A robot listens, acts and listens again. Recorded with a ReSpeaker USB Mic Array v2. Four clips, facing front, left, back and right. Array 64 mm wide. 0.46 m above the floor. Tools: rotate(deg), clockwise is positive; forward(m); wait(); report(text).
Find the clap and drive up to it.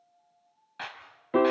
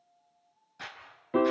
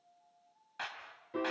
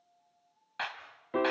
rotate(85)
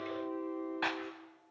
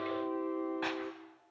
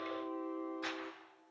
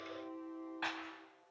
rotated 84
forward(1.0)
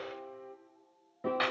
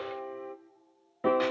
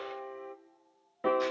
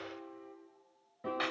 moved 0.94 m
wait()
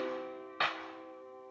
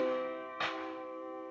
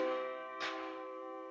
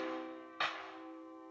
forward(1.0)
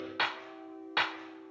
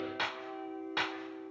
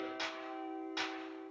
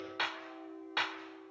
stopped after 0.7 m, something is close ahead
report("I am next to the clap.")